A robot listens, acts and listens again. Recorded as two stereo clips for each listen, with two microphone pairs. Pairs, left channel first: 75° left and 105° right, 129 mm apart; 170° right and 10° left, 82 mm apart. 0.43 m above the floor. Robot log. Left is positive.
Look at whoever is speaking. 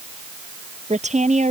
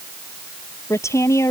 note: The woman speaking: 120° right.
cmd yaw -120
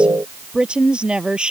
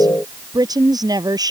note: The woman speaking is now 25° right.
cmd yaw -25
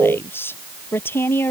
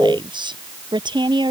end: Facing the woman speaking.